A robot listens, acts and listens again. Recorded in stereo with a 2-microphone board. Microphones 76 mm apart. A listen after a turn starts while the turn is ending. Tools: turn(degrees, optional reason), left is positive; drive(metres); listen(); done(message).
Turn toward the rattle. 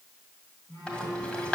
turn(degrees=30)
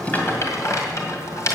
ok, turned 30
turn(degrees=135, reason="So it is at 135° left.")
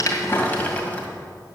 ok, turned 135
turn(degrees=25, reason="The rattle is now 25° left.")
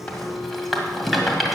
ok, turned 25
done("Found it: a rattle, straight ahead, 2 to 4 m away.")